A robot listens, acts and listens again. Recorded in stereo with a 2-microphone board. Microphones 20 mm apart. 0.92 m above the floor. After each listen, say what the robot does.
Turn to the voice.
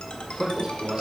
Turn 50° right.
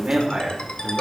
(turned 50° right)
Turn 60° right.
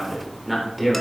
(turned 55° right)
Found it: a man speaking, straight ahead.